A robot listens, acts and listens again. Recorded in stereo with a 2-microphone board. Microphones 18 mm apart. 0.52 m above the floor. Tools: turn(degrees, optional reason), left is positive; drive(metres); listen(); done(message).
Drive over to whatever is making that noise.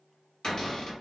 turn(degrees=50, reason="The cupboard door: about 50° left or 130° left.")
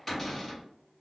turn(degrees=15, reason="So it is at 15° left.")
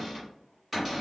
drive(metres=1.0)
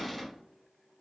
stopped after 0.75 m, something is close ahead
done("Arrived at the cupboard door, straight ahead.")